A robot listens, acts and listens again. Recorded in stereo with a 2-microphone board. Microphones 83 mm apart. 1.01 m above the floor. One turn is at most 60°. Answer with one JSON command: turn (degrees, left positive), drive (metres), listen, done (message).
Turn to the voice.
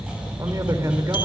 {"turn": -40}
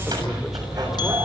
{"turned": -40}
{"listen": true}
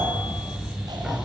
{"listen": true}
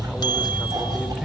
{"done": "I heard a man speaking, but can't make it out now. It was about straight ahead or 100° right."}